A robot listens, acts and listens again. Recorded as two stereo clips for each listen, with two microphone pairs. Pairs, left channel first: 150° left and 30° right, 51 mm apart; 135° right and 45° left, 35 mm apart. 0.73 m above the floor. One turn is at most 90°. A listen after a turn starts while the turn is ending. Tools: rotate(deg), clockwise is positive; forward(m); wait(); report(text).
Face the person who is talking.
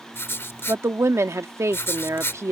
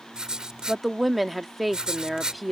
rotate(45)
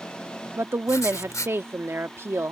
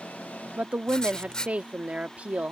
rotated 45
report("Found it: a woman speaking, straight ahead.")